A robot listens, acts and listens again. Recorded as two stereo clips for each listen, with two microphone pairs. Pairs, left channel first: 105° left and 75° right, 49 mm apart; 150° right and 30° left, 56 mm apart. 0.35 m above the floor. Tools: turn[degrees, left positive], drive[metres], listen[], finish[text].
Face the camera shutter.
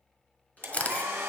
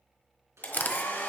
Thought: The camera shutter: 160° left.
Action: turn[160]
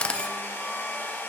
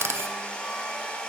Thought: The camera shutter is now 40° left.
Action: turn[40]
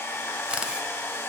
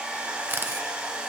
Action: finish[Found it: a camera shutter, straight ahead.]